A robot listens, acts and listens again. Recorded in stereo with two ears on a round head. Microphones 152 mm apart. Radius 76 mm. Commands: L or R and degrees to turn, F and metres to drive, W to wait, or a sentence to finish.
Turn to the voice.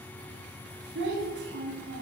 R70
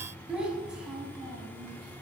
Found it: a child speaking, straight ahead, 1 to 2 m away.